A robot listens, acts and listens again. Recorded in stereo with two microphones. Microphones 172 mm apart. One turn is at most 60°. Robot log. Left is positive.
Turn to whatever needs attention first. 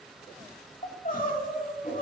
note: The crying: about 50° left or 130° left.
cmd yaw +50
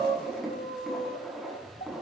note: So it is at 70° left.
cmd yaw +60
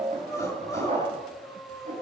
note: The crying is now 20° left.
cmd yaw +20
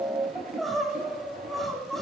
end: Found it: crying, straight ahead.